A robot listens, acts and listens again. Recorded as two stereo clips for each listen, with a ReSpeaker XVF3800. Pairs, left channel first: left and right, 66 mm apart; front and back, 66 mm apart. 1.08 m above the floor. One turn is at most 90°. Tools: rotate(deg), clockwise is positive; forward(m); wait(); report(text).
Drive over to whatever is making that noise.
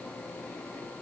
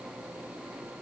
wait()
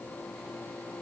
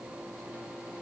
wait()
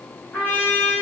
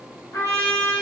rotate(-25)
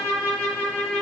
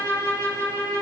rotate(-15)
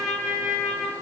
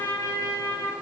forward(1.0)
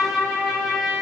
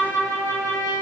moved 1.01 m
forward(1.0)
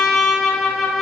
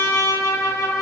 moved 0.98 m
forward(1.0)
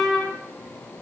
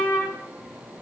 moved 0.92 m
forward(1.0)
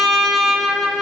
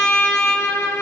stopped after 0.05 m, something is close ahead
report("I am next to the trumpet.")